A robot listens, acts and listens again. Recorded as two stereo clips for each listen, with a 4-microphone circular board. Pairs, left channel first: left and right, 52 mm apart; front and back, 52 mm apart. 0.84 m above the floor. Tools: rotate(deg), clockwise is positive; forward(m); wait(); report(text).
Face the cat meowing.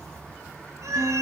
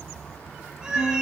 rotate(105)
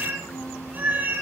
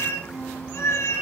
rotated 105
rotate(35)
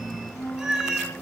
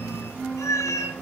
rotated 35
rotate(10)
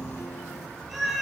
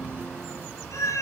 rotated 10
report("Facing the cat meowing, over 4 m away.")